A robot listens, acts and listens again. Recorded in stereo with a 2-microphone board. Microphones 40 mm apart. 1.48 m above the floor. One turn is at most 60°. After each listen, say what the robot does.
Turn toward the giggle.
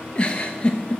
Turn 25° left.
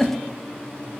Found it: a giggle, straight ahead, 1 to 2 m away.